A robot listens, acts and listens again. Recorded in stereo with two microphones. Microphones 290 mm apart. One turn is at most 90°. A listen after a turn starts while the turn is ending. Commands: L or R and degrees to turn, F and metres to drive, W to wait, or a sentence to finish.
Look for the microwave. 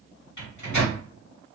L90
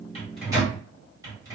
R10
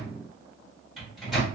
Found it: a microwave, straight ahead, 1 to 2 m away.